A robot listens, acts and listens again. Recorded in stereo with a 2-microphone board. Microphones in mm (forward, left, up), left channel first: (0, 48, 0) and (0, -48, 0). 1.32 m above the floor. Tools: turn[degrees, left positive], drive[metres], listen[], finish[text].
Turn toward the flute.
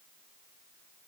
Action: listen[]
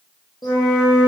Thought: The flute: about 45° left or 135° left.
Action: turn[45]
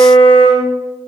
Thought: So it is at 85° left.
Action: turn[85]
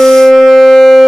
Thought: The flute is now 15° left.
Action: turn[15]
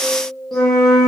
Action: finish[Found it: a flute, straight ahead, under 1 m away.]